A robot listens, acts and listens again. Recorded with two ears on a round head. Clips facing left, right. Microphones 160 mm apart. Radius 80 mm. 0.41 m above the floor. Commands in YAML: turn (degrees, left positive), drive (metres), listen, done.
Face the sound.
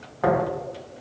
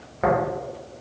turn: -30
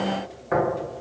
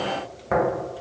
turn: -115
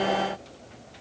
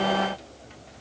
listen: true
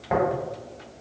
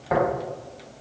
done: "Facing the tapping, 1 to 2 m away."